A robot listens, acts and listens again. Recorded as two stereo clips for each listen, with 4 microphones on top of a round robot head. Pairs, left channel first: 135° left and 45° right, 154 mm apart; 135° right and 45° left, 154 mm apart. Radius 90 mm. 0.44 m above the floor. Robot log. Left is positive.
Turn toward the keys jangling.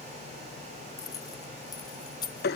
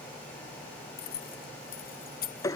note: The keys jangling: 165° right.
cmd yaw -165
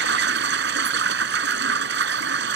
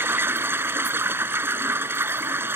cmd idle
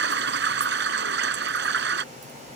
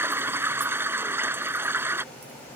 cmd idle
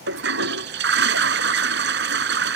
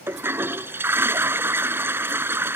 end: Facing where the keys jangling came from. I can't hear it now.